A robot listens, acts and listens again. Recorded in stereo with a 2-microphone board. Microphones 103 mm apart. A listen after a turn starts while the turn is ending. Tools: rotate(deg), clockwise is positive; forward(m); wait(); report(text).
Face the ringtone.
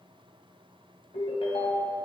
rotate(-70)
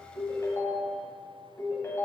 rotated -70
rotate(-30)
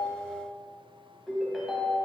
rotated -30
report("Found it: a ringtone, straight ahead.")